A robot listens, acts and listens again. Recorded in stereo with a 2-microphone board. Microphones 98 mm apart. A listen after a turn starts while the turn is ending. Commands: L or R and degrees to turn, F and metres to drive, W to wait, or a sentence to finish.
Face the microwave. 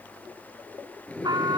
L30
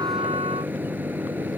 R20
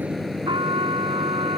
Facing the microwave.